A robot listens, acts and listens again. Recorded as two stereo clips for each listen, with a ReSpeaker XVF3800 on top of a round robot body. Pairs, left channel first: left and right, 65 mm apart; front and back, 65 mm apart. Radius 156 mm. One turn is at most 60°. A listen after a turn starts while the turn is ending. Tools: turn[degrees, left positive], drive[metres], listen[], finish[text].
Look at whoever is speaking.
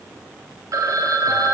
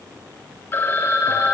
Action: listen[]
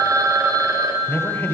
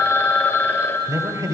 Thought: The man speaking: 155° left.
Action: turn[60]
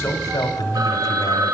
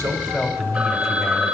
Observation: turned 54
Thought: The man speaking is now 100° left.
Action: turn[60]
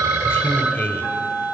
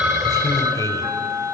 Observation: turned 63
Thought: The man speaking is now 35° left.
Action: turn[35]
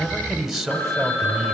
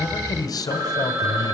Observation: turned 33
Action: finish[Facing the man speaking.]